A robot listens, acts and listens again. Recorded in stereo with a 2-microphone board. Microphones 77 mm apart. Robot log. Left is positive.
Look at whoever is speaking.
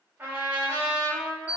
cmd idle
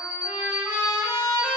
cmd idle
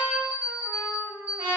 end: I can't make out anyone speaking, only an alarm clock and a trumpet.